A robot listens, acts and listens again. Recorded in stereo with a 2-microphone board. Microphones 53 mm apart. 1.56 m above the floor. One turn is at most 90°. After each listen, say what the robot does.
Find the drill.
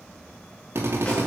Turn 50° right.
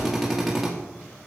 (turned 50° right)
Found it: a drill, straight ahead.